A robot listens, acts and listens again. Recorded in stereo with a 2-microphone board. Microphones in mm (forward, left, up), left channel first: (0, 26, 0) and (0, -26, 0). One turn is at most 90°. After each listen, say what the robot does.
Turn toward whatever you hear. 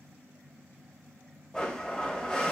Turn 15° left.
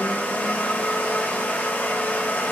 Turn 90° left.
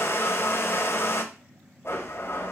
Turn 60° left.
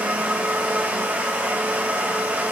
Turn 30° right.
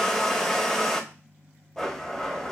Turn 10° left.
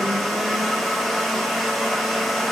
Found it: a blender, straight ahead, under 1 m away.